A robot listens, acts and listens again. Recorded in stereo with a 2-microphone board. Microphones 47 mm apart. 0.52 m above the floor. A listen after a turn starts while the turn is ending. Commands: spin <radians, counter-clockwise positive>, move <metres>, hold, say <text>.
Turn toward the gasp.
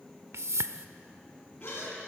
spin 1.05
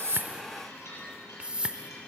hold
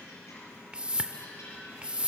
say I heard a gasp, but can't make it out now. It was about straight ahead or 60° left.